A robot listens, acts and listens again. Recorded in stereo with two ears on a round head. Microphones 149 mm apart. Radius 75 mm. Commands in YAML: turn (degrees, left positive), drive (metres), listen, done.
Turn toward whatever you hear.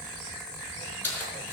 turn: 30
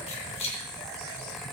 turn: 145
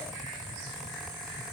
listen: true
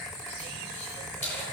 turn: 15
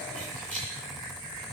listen: true
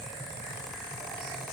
listen: true
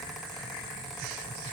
done: "Facing where the keys jangling came from. I can't hear it now."